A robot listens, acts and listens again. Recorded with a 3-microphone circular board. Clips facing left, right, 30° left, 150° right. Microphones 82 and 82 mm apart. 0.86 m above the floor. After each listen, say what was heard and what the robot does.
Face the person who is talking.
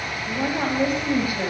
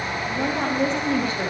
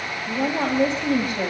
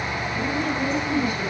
The woman speaking: 10° left. Turn 10° left.
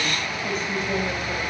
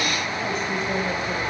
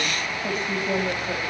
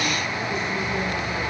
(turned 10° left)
Found it: a woman speaking, straight ahead.